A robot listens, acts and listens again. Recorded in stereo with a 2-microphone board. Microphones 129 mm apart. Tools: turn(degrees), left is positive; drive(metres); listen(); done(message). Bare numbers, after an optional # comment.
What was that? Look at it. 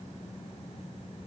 listen()
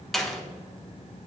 turn(30)
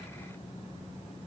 listen()
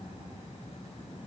done("I heard a door slam, but can't make it out now. It was about 30° right or 150° left.")